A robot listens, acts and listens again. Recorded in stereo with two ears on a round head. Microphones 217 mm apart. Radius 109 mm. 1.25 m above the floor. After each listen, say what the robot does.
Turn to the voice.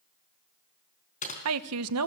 Turn 70° right.
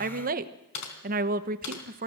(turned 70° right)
Turn 40° right.
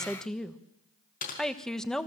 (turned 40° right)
Found it: a woman speaking, straight ahead.